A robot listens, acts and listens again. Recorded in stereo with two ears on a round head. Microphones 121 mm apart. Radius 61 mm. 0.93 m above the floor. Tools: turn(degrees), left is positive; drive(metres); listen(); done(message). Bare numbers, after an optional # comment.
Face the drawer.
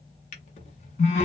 # The drawer: about 50° left or 130° left.
turn(50)
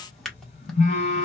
done("Found it: a drawer, straight ahead.")